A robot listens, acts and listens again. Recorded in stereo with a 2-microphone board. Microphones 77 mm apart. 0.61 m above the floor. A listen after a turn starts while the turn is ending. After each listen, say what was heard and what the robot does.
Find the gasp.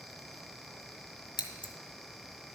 Keep listening.
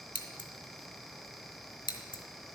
Keep listening.
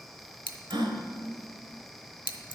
Turn 90° right.
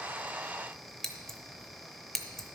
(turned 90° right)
Facing where the gasp came from. I can't hear it now.